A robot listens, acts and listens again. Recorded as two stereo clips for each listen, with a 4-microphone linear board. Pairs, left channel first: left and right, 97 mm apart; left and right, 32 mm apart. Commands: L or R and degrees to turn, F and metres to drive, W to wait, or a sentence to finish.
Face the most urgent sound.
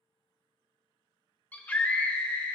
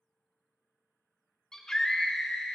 L15
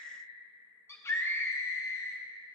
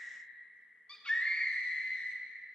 L150
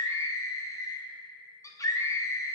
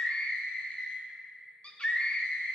L40
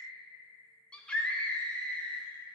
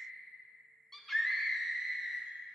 L10
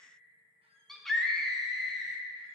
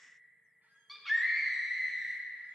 Facing the scream.